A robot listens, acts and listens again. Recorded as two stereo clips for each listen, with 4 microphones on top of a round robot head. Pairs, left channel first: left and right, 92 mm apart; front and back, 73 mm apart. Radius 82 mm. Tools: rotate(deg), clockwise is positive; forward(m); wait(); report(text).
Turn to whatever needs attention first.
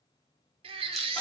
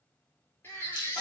rotate(70)
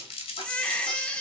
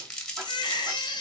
rotate(-10)
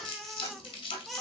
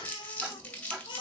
report("Found it: a baby crying, straight ahead.")